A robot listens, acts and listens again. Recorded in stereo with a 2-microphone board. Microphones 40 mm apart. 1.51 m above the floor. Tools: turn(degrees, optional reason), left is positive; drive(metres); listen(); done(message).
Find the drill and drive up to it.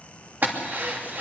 turn(degrees=-50, reason="The drill: about 50° right or 130° right.")
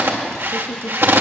turn(degrees=-75, reason="So it is at 75° right.")
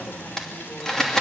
turn(degrees=15, reason="The drill is now 15° left.")
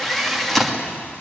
drive(metres=1.0)
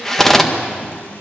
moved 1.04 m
turn(degrees=10, reason="The drill is now 10° left.")
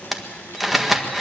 drive(metres=1.0)
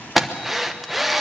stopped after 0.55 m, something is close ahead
done("I am next to the drill.")